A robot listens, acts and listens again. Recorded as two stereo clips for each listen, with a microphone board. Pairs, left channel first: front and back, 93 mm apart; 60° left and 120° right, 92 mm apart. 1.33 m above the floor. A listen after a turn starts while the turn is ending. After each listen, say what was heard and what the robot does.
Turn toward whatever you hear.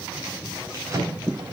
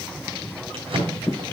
The drawer: 125° right. Turn 125° right.
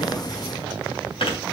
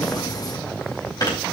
The drawer is now 10° left. Turn 10° left.
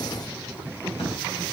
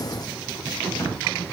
Facing the drawer, 2 to 4 m away.